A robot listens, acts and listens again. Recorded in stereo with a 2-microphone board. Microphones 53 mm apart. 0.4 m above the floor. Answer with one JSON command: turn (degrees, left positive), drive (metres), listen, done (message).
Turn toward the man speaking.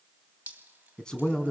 {"turn": 15}
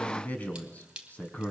{"turn": 150}
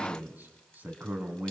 {"turn": -35}
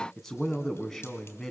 {"turn": 10}
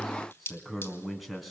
{"done": "Facing the man speaking, 2 to 4 m away."}